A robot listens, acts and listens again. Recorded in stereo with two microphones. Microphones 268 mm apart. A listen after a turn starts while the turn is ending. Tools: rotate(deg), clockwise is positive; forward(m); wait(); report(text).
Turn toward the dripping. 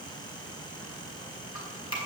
rotate(-55)
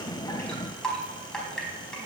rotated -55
report("Found it: dripping, straight ahead, over 4 m away.")